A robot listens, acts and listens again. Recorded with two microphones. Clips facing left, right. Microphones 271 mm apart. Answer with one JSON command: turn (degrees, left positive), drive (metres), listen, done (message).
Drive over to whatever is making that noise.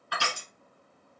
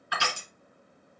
{"turn": -20}
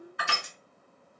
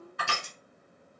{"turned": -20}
{"turn": -135}
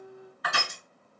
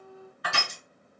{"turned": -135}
{"turn": -35}
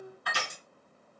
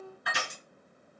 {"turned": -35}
{"drive": 1.0}
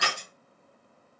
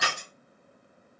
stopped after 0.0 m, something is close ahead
{"done": "Blocked. The crushing is further on, straight ahead."}